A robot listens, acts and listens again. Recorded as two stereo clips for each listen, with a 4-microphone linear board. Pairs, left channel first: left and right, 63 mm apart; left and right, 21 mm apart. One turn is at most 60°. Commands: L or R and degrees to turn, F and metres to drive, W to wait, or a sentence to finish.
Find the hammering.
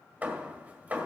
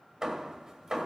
R25
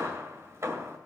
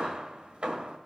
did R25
R60
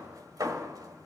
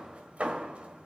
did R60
R60
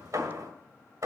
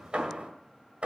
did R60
R60
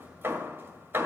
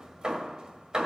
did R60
R35
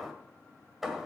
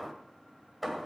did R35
Found it: hammering, straight ahead, 1 to 2 m away.